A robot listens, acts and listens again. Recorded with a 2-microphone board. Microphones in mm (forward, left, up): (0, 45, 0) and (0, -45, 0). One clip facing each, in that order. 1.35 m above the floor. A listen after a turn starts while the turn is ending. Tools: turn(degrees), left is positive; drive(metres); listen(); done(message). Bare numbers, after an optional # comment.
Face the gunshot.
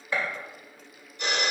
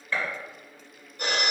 turn(30)
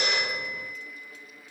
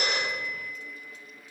listen()
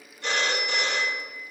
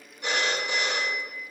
done("I heard a gunshot, but can't make it out now. It was about 15° right or 135° left.")